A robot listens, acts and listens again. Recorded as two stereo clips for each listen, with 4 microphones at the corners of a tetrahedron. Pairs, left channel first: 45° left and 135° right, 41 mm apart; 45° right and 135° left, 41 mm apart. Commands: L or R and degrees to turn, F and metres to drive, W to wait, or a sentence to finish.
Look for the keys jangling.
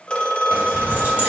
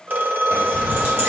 L175
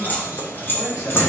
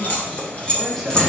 L25
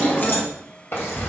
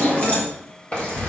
L25
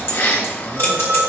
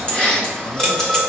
L30
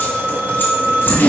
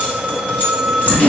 L10
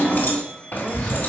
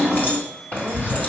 Found it: keys jangling, straight ahead, 2 to 4 m away.